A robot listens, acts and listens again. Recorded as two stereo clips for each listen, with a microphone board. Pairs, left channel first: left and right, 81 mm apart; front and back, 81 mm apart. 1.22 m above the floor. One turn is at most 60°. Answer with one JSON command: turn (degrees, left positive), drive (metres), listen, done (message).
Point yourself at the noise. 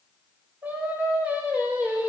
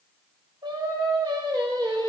{"turn": -60}
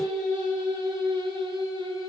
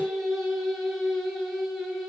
{"turn": -60}
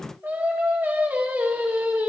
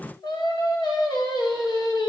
{"turn": -25}
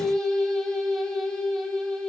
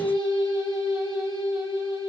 {"done": "Found it: singing, straight ahead."}